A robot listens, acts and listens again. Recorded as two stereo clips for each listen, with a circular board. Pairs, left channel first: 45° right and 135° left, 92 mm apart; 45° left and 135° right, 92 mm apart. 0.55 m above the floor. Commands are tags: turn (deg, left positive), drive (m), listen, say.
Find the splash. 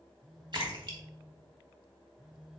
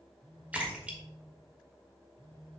<turn deg="155"/>
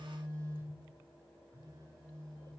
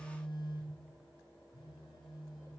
<say>I heard a splash from this way, but can't make it out now.</say>